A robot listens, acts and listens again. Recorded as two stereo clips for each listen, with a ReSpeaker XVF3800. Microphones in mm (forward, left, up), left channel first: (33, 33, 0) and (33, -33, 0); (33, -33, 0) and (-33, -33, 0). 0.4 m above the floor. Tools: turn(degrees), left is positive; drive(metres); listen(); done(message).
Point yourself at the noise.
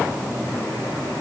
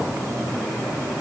listen()
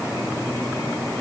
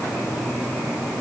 listen()
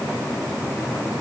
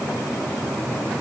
done("I can't make out anything to turn to.")